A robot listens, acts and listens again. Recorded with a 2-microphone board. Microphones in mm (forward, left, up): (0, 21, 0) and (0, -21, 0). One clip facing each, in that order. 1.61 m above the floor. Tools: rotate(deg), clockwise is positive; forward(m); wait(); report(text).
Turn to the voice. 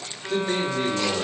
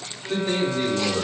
rotate(70)
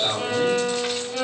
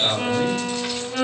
report("Found it: a man speaking, straight ahead, 2 to 4 m away.")